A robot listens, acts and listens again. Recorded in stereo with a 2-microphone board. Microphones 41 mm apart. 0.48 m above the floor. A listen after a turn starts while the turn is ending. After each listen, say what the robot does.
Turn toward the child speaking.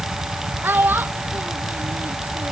Turn 55° right.
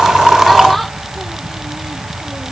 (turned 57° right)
Keep listening.
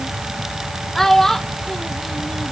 Turn 10° left.
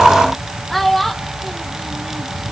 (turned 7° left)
Facing the child speaking.